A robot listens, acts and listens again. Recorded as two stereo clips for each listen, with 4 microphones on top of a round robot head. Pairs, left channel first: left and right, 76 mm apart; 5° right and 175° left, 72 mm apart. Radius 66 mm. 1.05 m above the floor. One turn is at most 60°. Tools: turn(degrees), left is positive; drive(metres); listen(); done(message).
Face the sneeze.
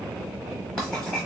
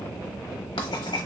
listen()
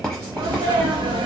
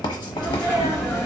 turn(degrees=-60)
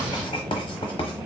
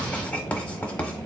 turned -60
turn(degrees=-45)
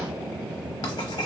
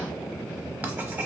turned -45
done("Facing where the sneeze came from. I can't hear it now.")